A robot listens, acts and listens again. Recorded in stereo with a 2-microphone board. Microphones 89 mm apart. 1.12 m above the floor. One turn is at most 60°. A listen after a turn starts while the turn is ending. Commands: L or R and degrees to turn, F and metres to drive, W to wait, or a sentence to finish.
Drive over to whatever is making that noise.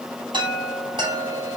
R60
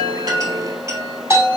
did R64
R40
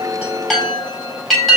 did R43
F1.0
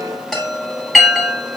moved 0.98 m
F1.0
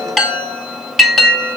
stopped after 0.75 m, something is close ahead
I am next to the chime.